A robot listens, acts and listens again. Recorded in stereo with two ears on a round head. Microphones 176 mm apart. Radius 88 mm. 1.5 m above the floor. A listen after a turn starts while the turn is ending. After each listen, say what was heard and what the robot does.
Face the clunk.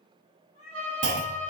The clunk: about 60° right or 120° right. Turn 60° right.
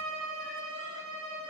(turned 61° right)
Keep listening.
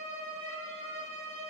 I heard a clunk, but can't make it out now. It was about straight ahead or 60° right.